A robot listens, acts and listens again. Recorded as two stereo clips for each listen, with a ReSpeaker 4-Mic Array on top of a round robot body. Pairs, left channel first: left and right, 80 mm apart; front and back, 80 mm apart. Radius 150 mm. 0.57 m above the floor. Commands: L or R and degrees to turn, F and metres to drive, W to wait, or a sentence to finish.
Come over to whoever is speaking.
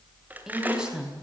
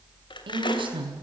R170
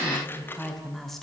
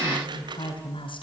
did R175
F1.0
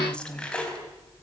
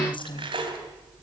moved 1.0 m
L10
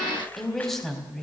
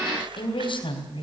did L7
F1.0
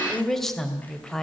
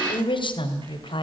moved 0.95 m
F1.0
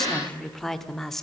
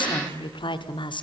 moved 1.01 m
F1.0
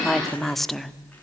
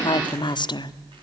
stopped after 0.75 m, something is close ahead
Arrived at the woman speaking, straight ahead.